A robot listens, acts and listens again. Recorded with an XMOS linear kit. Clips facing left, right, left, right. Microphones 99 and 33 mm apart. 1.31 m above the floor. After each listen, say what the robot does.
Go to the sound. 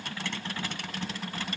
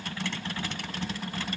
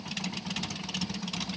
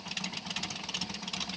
Keep listening.
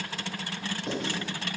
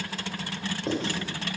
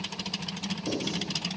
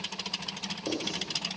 Turn 35° right.
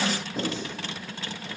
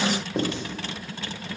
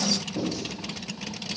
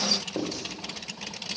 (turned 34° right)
Turn 115° right.
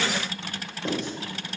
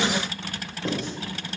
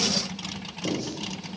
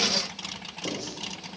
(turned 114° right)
Drive 1.0 m forward.
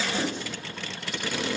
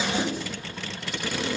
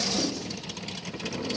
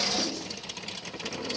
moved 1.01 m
Keep listening.
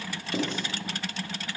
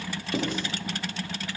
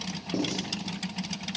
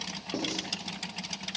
Turn 10° right.
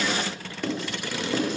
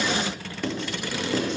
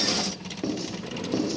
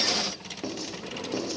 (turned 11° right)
Drive 1.0 m forward.
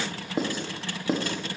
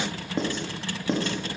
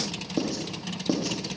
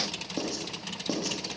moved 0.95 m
Turn 10° left.
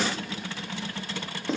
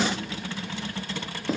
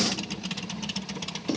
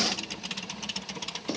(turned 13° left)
Drive 1.0 m forward.
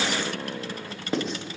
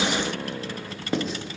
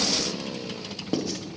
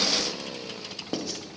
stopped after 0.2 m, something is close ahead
Arrived at the writing, straight ahead.